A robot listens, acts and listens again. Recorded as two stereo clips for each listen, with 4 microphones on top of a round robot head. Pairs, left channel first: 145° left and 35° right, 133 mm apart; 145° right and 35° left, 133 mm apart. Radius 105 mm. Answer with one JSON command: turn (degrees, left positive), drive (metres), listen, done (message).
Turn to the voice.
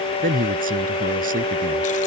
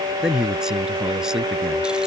{"turn": -50}
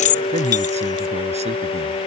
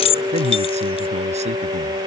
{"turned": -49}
{"listen": true}
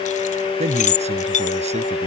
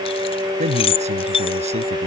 {"done": "Found it: a man speaking, straight ahead."}